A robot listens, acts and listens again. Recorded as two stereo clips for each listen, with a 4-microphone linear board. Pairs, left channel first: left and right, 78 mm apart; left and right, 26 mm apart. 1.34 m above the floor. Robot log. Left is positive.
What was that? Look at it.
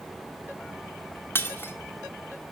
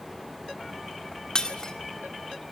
note: The breaking glass: about 30° left or 150° left.
cmd yaw +30
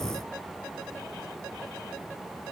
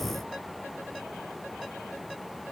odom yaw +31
cmd idle
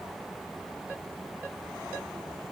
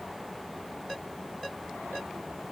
end: I heard breaking glass, but can't make it out now. It was about straight ahead or 120° left.